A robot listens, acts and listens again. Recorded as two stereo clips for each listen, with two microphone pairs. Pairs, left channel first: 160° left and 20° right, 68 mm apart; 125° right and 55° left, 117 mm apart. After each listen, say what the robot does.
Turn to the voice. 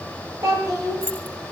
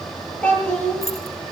Turn 45° right.
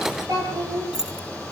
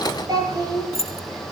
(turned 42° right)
Facing the child speaking, over 4 m away.